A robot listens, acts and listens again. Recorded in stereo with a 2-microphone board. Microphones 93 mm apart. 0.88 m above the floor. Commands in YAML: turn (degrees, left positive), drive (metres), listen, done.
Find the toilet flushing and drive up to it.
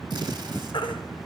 listen: true
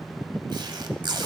listen: true
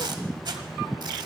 done: "I can't make out a toilet flushing, only a baby crying and tape being pulled."